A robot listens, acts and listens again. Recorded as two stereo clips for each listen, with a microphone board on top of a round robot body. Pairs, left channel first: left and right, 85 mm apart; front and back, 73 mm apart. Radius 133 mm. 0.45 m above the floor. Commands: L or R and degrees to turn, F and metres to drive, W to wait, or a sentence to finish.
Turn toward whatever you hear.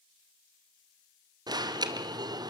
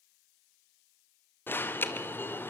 R60
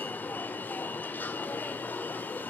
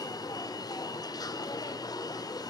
L20
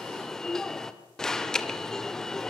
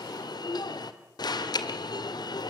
Facing the alarm.